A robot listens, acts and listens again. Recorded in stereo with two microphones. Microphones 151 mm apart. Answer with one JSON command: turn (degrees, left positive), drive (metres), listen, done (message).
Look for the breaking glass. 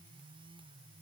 {"listen": true}
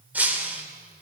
{"turn": -30}
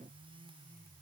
{"listen": true}
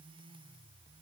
{"done": "I heard breaking glass, but can't make it out now. It was about 20° left or 140° right."}